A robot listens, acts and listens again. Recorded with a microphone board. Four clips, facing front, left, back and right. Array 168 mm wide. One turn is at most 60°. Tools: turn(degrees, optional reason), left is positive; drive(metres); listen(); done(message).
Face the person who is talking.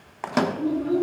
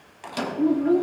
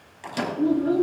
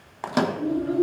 turn(degrees=60, reason="The child speaking: 115° left.")
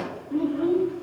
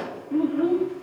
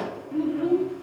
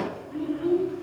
turn(degrees=60, reason="The child speaking is now 75° left.")
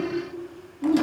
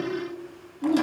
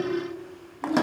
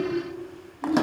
turn(degrees=45, reason="The child speaking is now 45° left.")
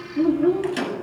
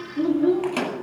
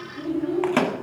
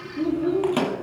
turn(degrees=25, reason="The child speaking is now 25° left.")
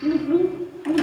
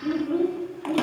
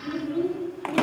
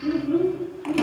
turn(degrees=10, reason="The child speaking is now 10° left.")
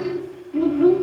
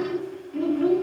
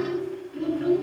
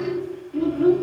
done("Found it: a child speaking, straight ahead.")